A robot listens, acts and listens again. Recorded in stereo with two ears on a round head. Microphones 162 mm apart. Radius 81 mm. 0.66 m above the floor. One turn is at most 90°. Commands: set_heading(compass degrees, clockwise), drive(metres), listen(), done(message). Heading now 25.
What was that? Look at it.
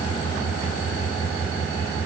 listen()
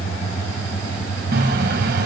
set_heading(90)
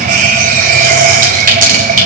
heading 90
set_heading(140)
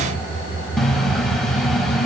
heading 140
done("Found it: a running tap, straight ahead.")